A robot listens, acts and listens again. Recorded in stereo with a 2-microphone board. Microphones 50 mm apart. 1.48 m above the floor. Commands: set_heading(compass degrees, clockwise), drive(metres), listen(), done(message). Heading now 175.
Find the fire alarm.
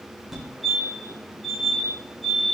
set_heading(205)
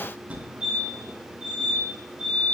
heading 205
set_heading(355)
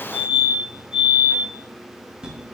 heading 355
set_heading(15)
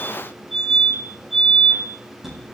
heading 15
done("Facing the fire alarm, over 4 m away.")